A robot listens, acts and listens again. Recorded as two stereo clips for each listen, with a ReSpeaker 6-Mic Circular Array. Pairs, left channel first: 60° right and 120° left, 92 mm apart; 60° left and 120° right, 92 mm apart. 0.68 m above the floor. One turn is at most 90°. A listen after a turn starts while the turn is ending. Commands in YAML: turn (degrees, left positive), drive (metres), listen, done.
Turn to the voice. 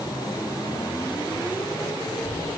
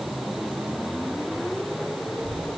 turn: 80
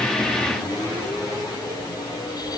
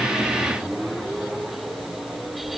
turn: -15
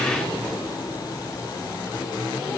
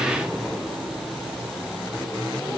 done: "Facing the child speaking, over 4 m away."